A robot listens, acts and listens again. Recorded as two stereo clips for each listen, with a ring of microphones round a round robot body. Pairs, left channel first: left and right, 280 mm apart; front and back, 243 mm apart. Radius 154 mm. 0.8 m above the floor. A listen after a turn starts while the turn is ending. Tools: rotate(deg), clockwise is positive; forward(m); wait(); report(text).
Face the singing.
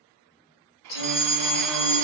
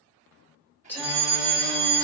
rotate(-80)
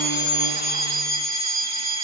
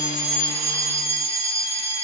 wait()
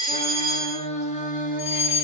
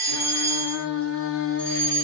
rotate(-30)
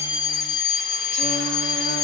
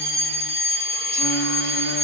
wait()
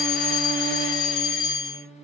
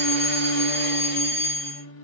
rotate(-25)
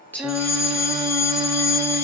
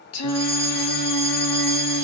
report("Found it: singing, straight ahead.")